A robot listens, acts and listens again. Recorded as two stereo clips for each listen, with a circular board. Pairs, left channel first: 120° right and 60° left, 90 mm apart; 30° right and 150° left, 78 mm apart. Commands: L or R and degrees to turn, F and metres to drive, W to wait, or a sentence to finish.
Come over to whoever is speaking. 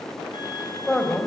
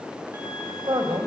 L155
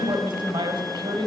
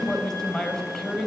L55
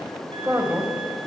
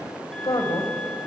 F1.0
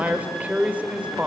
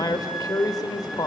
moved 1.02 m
R10
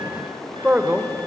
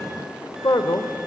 F1.0
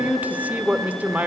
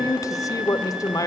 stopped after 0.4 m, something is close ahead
R10
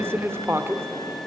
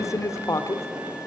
I am next to the man speaking.